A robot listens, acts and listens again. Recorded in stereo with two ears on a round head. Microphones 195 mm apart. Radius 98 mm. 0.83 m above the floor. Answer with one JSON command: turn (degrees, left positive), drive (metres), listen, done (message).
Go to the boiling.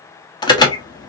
{"listen": true}
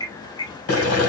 {"turn": 75}
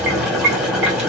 {"drive": 1.0}
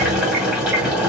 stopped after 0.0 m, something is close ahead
{"done": "Blocked. The boiling is further on, straight ahead."}